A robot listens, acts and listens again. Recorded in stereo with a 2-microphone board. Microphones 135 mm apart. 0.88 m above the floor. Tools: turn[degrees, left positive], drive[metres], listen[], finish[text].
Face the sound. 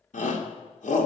Thought: The shout: about 70° left or 110° left.
Action: turn[70]
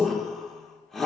Action: finish[Facing the shout, 2 to 4 m away.]